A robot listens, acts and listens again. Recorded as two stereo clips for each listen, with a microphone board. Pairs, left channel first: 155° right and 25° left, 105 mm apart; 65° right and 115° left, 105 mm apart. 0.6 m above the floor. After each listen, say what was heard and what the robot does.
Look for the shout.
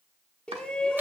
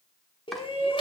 The shout: 80° right. Turn 80° right.
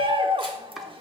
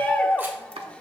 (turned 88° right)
The shout is now 10° left. Turn 10° left.
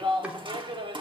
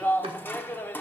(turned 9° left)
Found it: a shout, straight ahead.